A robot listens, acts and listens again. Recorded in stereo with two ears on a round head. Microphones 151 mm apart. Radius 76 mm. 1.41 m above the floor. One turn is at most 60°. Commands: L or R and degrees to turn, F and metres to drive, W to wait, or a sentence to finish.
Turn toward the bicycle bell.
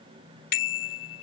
L60
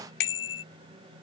L60
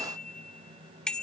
Found it: a bicycle bell, straight ahead.